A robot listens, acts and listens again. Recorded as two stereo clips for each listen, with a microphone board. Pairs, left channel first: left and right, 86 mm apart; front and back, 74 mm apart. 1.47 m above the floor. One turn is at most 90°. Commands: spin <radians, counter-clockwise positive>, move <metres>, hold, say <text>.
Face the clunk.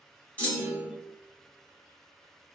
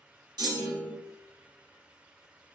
spin 1.57
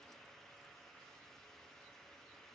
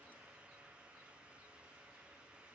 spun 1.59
spin 1.22
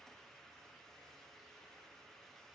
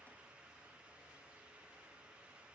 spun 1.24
say Facing where the clunk came from. I can't hear it now.